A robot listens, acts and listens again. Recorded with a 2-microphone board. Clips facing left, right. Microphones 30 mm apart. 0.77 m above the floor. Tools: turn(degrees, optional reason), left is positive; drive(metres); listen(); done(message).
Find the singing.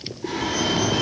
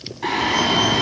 turn(degrees=-90)
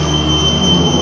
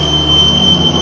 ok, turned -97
turn(degrees=10, reason="So it is at 10° left.")
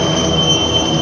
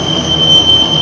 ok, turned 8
done("Found it: singing, straight ahead, over 4 m away.")